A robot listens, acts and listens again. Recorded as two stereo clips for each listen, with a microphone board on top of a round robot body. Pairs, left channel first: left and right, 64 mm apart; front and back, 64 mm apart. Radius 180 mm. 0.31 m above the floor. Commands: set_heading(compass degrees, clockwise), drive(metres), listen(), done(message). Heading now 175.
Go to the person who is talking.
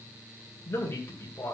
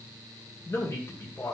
set_heading(130)
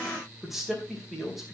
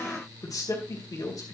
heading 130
drive(1.0)
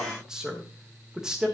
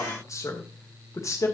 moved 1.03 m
set_heading(140)
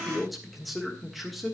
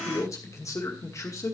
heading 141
drive(1.0)
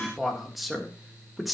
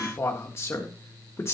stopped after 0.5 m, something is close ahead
done("Arrived at the man speaking, straight ahead.")